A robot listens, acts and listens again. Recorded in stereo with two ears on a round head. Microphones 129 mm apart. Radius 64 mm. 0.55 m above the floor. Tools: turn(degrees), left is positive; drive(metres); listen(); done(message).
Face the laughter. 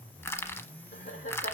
turn(degrees=55)
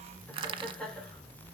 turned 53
done("Found it: laughter, straight ahead.")